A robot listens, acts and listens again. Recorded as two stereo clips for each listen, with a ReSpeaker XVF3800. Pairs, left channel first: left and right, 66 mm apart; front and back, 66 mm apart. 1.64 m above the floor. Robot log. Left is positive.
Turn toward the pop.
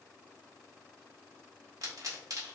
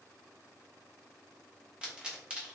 note: The pop: 105° right.
cmd yaw -105
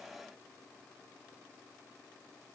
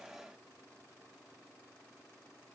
end: Facing where the pop came from. I can't hear it now.